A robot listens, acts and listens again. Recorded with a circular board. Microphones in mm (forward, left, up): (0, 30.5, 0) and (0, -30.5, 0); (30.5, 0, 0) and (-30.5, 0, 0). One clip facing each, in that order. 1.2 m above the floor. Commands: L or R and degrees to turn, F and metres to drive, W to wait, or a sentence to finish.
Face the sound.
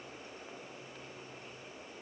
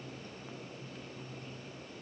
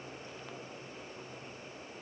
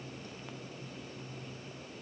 W
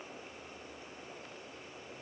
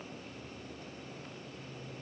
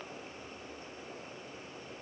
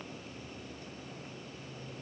W
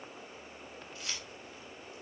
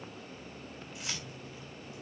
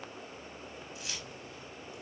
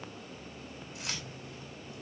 R165
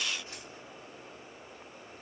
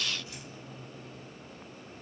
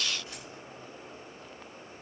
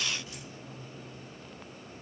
W
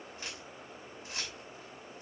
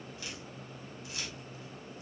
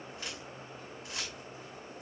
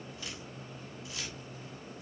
L35
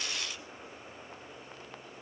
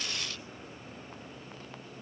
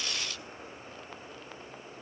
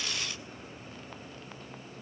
W
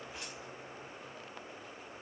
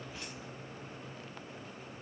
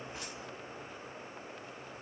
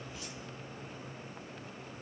W
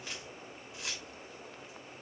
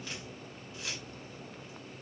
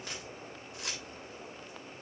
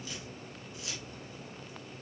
Found it: keys jangling, straight ahead.